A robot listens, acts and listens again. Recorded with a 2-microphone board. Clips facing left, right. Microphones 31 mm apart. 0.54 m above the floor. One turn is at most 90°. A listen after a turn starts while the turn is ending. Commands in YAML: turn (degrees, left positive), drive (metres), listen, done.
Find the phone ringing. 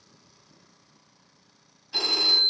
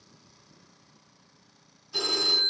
turn: 60
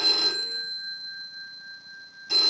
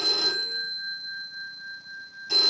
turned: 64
done: "Facing the phone ringing."